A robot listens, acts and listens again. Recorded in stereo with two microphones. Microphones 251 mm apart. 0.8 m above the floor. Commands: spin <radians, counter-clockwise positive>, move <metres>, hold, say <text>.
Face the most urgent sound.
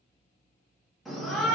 spin 0.52
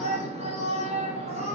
spin -0.52
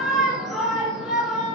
say Found it: a shout, straight ahead, 1 to 2 m away.